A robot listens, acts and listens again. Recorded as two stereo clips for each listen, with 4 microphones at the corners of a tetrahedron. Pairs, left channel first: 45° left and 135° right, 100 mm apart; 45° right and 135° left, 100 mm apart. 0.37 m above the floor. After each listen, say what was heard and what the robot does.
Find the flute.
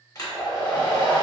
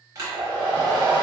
Keep listening.
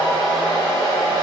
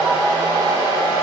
Keep listening.
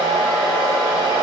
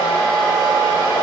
I can't make out a flute, only a hair dryer.